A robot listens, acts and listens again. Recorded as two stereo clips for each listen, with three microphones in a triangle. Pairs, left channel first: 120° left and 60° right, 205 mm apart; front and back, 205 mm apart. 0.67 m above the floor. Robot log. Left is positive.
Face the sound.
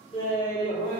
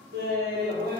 note: The laughter: straight behind.
cmd yaw +180
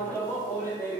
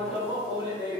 note: The laughter is now 55° left.
cmd yaw +55
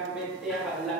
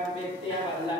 note: The laughter is now 45° left.
cmd yaw +45
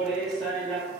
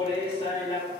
note: The laughter is now 50° left.
cmd yaw +50
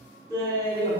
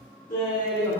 note: The laughter is now 10° left.
cmd yaw +10
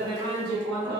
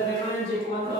end: Found it: laughter, straight ahead, 1 to 2 m away.